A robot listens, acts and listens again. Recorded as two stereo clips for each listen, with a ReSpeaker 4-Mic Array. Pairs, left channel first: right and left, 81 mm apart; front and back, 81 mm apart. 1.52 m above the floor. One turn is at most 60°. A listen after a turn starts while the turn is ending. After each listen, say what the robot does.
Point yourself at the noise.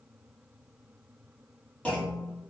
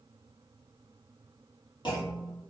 Turn 15° right.
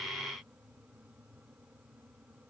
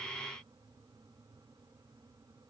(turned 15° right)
I heard a clunk from this way, but can't make it out now.